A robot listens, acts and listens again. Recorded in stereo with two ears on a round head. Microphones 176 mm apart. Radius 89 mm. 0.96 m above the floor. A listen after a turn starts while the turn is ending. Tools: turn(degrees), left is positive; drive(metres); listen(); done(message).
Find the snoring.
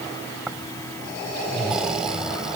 turn(degrees=-30)
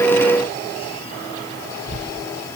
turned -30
turn(degrees=30)
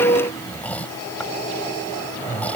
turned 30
done("Facing the snoring.")